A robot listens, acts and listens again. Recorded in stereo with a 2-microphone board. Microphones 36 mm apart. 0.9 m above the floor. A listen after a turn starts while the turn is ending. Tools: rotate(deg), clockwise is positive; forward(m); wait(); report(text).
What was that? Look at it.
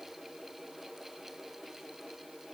wait()
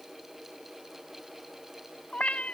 rotate(-35)
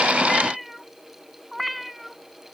report("Found it: a cat meowing, straight ahead.")